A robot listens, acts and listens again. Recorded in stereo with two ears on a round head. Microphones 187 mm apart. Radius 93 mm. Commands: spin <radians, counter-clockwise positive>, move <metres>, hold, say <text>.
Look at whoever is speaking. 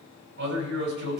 spin -1.05
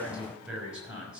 say Facing the man speaking.